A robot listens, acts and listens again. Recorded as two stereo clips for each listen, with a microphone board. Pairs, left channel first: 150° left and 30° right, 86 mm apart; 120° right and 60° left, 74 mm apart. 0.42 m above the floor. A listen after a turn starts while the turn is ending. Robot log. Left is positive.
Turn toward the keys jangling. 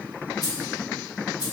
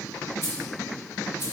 note: The keys jangling: 175° right.
cmd yaw -175
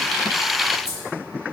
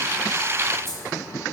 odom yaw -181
end: Found it: keys jangling, straight ahead.